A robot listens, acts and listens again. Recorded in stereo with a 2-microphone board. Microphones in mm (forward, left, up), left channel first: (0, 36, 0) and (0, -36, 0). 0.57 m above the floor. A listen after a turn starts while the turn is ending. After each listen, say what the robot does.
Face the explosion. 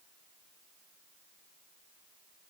Keep listening.
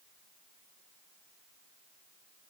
Keep listening.
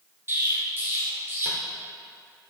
Turn 30° right.
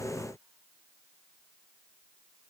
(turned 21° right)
Keep listening.
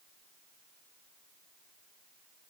I heard an explosion, but can't make it out now. It was about 10° right or 130° right.